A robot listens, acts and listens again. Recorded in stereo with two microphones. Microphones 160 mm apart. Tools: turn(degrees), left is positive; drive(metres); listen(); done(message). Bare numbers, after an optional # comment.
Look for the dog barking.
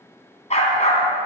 # The dog barking: about 45° left or 135° left.
turn(45)
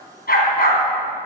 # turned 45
# So it is at 70° left.
turn(70)
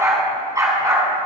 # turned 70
# The dog barking is now 25° right.
turn(-25)
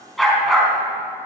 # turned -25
done("Found it: a dog barking, straight ahead, 2 to 4 m away.")